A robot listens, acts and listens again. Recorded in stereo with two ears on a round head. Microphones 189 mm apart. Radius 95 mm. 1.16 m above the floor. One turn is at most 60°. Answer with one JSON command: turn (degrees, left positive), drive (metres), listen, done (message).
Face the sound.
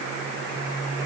{"listen": true}
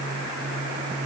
{"listen": true}
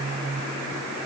{"done": "I can't make out anything to turn to."}